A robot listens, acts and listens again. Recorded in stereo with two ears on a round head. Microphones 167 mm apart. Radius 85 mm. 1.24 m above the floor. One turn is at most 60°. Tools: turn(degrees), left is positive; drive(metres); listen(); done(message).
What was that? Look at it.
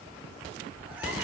listen()
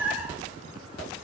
turn(degrees=-30)
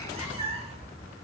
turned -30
turn(degrees=-60)
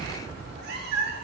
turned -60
turn(degrees=-60)
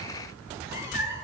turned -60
turn(degrees=-20)
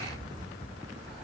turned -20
listen()
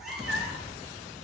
done("Found it: a cat meowing, straight ahead, 1 to 2 m away.")